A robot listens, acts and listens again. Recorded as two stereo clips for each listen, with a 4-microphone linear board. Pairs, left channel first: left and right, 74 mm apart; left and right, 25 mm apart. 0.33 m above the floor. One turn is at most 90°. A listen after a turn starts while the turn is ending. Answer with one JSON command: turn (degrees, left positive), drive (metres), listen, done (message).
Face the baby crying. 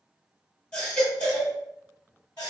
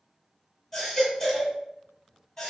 {"turn": 30}
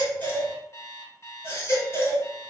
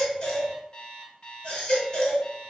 {"turn": 90}
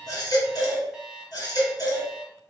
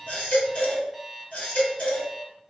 {"turn": 80}
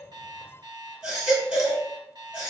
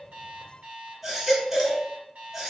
{"turn": -15}
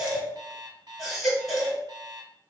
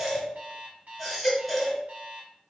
{"done": "Found it: a baby crying, straight ahead, 1 to 2 m away."}